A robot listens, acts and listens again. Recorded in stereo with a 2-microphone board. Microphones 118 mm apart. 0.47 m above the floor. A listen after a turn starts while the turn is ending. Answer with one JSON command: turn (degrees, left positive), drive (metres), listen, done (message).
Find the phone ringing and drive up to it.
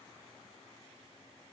{"listen": true}
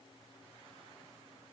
{"listen": true}
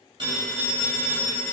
{"turn": -40}
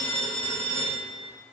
{"turn": -95}
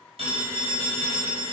{"turn": -35}
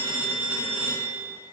{"turn": -15}
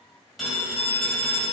{"drive": 1.0}
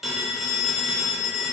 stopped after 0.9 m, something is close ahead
{"done": "I am next to the phone ringing."}